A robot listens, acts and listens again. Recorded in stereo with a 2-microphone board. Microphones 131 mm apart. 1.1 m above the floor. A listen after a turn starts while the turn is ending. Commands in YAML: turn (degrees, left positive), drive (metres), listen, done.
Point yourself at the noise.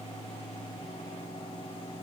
listen: true
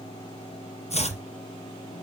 turn: 55
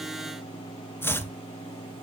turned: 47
turn: 20
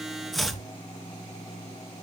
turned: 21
done: "Facing the chopping, 2 to 4 m away."